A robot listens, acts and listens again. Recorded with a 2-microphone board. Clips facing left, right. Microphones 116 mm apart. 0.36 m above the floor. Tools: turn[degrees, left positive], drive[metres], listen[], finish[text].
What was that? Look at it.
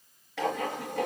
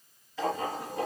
Action: turn[90]
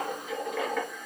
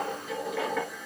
Action: finish[Found it: writing, straight ahead, 2 to 4 m away.]